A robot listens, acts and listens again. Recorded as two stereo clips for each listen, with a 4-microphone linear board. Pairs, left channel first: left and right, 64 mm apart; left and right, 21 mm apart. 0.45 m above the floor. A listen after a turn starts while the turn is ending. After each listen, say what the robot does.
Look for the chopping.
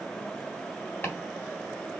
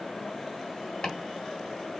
Turn 30° left.
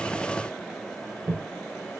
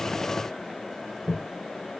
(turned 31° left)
Found it: chopping, straight ahead.